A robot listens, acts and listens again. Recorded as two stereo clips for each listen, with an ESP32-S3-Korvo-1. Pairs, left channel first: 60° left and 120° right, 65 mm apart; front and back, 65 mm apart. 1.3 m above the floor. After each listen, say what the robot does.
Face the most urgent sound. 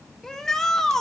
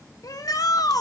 Turn 20° right.
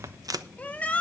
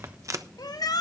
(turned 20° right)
Facing the shout, 1 to 2 m away.